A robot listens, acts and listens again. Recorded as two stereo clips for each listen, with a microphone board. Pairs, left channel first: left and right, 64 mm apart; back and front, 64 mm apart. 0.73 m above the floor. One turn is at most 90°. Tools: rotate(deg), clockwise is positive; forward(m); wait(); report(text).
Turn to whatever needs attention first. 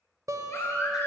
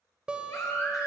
rotate(-90)
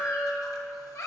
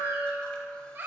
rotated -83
rotate(-55)
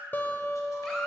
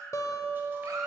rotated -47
rotate(-10)
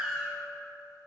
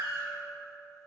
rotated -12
report("Found it: a baby crying, straight ahead.")